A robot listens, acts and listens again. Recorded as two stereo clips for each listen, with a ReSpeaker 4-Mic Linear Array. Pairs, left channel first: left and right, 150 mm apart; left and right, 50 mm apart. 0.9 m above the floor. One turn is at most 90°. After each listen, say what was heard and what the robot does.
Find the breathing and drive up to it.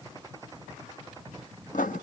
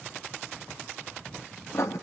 Keep listening.
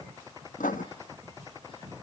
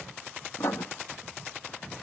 Keep listening.
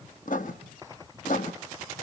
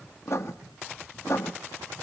I can't make out breathing, only writing.